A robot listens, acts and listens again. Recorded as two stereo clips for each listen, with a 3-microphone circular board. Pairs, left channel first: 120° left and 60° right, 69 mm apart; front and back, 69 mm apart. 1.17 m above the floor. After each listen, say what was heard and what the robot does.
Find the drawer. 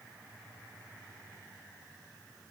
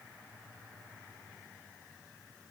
Keep listening.
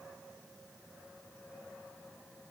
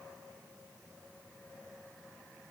Keep listening.
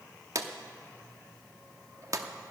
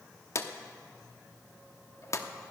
The drawer: 35° right. Turn 35° right.
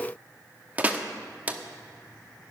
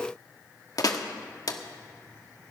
Facing the drawer.